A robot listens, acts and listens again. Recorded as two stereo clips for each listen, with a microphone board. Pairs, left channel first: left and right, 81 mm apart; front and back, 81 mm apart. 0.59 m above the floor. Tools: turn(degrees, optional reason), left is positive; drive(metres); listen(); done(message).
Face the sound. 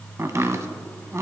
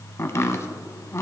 turn(degrees=-45, reason="The chopping: 45° right.")
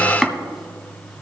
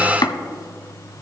done("Facing the chopping, under 1 m away.")